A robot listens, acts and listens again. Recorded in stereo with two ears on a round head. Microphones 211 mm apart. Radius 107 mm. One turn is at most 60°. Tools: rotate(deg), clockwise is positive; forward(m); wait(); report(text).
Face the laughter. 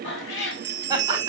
rotate(15)
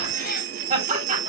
rotate(60)
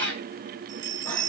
rotate(60)
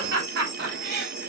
rotate(50)
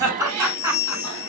rotate(15)
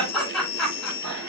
report("Found it: laughter, straight ahead, over 4 m away.")